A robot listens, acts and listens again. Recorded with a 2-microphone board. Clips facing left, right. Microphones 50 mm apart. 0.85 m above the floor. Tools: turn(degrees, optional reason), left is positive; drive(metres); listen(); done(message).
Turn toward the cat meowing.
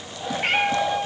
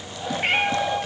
turn(degrees=-30)
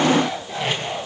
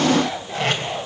listen()
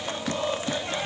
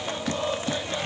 listen()
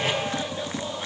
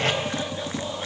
done("I heard a cat meowing, but can't make it out now. It was about 25° left or 145° right.")